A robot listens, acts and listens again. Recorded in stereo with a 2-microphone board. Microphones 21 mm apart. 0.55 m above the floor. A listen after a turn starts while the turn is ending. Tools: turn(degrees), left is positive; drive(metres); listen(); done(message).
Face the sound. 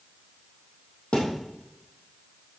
turn(degrees=90)
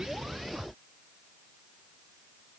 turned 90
done("I heard a thud from this way, but can't make it out now.")